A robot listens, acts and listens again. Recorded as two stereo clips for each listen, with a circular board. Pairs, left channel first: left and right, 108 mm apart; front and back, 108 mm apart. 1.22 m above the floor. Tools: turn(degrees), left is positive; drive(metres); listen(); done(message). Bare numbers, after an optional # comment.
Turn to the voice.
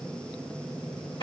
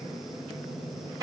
listen()
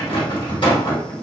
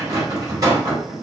listen()
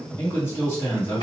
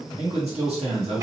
# The man speaking: 160° left.
turn(160)
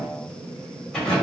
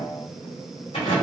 listen()
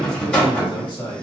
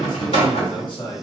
# The man speaking is now 45° left.
turn(45)
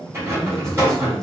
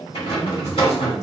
listen()
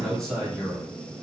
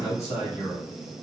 done("Found it: a man speaking, straight ahead, 1 to 2 m away.")